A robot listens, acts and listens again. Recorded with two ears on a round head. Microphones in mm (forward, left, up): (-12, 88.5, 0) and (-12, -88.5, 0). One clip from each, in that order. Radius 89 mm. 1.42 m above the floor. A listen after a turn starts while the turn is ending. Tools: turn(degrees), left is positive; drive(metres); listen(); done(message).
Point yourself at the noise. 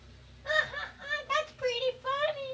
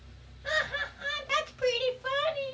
turn(degrees=-55)
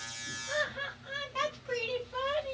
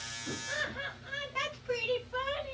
done("Found it: laughter, straight ahead, 1 to 2 m away.")